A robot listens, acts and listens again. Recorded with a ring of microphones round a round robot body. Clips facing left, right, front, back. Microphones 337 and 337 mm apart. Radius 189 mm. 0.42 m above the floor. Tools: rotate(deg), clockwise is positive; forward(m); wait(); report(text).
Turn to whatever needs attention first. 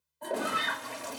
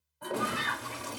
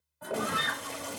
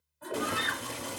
rotate(-130)
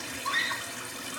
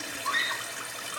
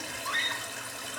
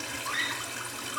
rotate(-45)
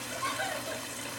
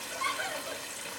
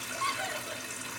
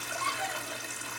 report("Facing the scream.")